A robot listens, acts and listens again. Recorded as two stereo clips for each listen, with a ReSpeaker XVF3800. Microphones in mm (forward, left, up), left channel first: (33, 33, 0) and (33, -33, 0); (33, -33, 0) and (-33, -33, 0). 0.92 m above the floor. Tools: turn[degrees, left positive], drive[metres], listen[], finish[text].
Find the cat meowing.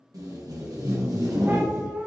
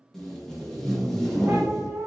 Thought: The cat meowing: 145° right.
Action: turn[-145]
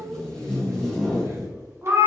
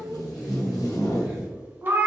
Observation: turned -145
Thought: The cat meowing is now 135° right.
Action: turn[-135]
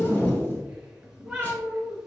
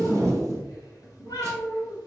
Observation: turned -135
Thought: The cat meowing is now 15° right.
Action: turn[-15]
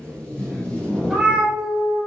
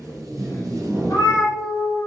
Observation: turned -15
Action: finish[Found it: a cat meowing, straight ahead.]